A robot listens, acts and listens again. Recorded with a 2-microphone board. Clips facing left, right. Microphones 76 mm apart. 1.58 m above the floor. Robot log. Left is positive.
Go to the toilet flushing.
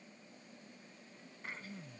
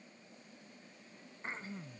cmd idle
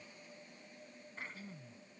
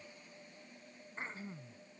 cmd idle
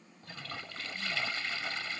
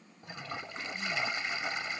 note: The toilet flushing: about 20° right or 160° right.
cmd yaw -20
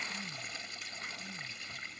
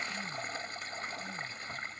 note: So it is at 140° right.
cmd yaw -140
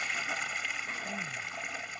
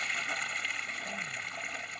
cmd fwd 1.0
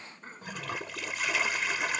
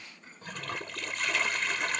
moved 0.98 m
cmd fwd 1.0
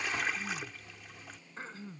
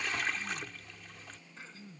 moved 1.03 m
cmd fwd 1.0
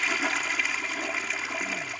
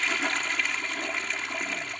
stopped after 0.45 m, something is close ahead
end: I am next to the toilet flushing.